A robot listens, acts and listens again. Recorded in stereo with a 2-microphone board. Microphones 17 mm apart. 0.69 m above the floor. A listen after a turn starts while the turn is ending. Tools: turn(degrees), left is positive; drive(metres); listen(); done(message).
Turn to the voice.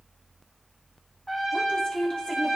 turn(degrees=55)
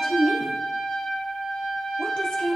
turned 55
turn(degrees=60)
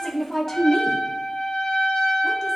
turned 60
turn(degrees=20)
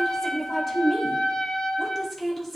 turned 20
done("Facing the woman speaking.")